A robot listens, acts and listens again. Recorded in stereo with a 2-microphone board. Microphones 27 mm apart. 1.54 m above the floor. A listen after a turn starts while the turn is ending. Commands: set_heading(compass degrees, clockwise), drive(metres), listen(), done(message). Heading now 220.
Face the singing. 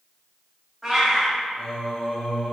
set_heading(175)
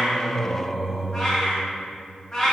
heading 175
set_heading(160)
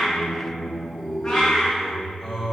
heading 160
set_heading(140)
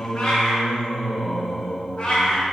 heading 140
done("Facing the singing, 2 to 4 m away.")